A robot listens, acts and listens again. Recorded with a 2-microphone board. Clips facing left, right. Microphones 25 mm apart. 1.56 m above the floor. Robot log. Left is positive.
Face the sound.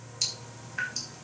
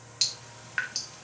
cmd yaw -90
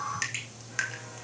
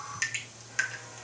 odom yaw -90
note: So it is at 10° left.
cmd yaw +10
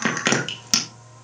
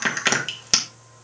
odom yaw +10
end: Found it: dripping, straight ahead, 2 to 4 m away.